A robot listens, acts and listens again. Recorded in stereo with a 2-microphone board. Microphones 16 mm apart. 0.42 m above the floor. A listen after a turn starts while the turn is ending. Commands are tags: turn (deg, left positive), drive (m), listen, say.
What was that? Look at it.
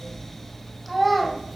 <turn deg="30"/>
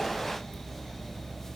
<listen/>
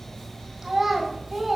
<turn deg="-35"/>
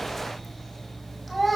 <say>Found it: a child speaking, straight ahead, 1 to 2 m away.</say>